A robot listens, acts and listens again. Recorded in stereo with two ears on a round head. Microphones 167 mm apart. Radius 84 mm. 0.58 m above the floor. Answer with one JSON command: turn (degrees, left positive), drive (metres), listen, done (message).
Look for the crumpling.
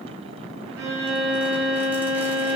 {"listen": true}
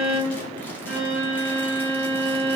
{"listen": true}
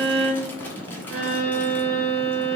{"done": "I can't make out crumpling to turn to."}